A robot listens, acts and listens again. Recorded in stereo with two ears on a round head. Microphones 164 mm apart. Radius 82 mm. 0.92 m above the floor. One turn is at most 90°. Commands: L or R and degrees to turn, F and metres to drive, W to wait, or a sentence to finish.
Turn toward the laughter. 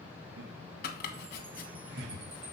R60
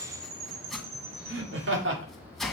R70
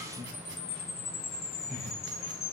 L15
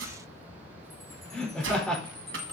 Found it: laughter, straight ahead, 2 to 4 m away.